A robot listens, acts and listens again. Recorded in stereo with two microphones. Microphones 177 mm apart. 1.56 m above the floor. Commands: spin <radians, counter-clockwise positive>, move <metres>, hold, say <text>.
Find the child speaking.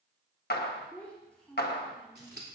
spin 0.52
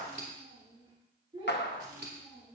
spin -0.61
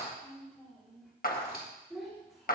say Found it: a child speaking, straight ahead.